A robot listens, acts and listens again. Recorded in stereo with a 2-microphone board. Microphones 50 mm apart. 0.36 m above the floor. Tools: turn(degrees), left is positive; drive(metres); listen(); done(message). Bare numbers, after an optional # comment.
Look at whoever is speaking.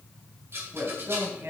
# The man speaking: about 60° right or 120° right.
turn(-60)
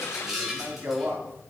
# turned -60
# So it is at 55° right.
turn(-55)
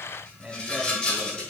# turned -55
# The man speaking is now 25° right.
turn(-25)
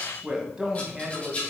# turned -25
# The man speaking is now 15° right.
turn(-15)
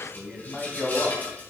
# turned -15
done("Facing the man speaking, 2 to 4 m away.")